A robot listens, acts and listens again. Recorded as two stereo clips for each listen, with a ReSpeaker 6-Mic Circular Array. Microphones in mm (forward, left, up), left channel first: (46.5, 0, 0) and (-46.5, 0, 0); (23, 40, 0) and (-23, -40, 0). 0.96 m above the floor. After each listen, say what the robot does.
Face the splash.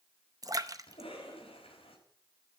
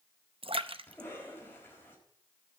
Turn 130° right.
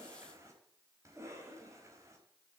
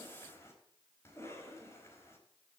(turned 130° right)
I heard a splash from this way, but can't make it out now.